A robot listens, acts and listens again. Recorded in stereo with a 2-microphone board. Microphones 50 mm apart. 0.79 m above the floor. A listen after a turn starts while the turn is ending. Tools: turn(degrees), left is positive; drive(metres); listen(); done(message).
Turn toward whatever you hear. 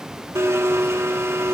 turn(degrees=-90)
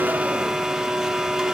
turn(degrees=-10)
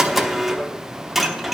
done("Found it: a blender, straight ahead.")